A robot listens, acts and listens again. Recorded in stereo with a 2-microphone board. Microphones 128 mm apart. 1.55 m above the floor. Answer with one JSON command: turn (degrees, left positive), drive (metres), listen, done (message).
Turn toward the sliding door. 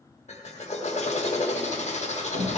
{"turn": -65}
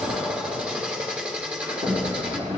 {"turn": -50}
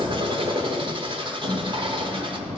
{"turn": -15}
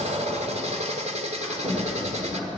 {"done": "Found it: a sliding door, straight ahead, 2 to 4 m away."}